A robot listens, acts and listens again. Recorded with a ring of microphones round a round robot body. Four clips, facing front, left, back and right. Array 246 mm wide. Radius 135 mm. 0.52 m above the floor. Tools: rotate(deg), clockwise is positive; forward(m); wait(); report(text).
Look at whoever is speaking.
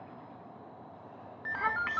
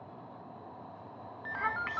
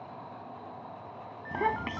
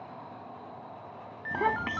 rotate(130)
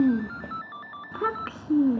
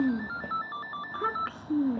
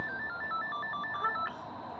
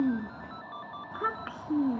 report("Found it: a child speaking, straight ahead.")